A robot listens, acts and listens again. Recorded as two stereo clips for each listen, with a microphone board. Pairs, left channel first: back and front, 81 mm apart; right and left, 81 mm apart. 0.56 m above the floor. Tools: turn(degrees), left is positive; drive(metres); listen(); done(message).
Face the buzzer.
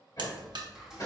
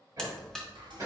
turn(degrees=-10)
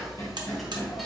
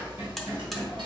done("Facing the buzzer.")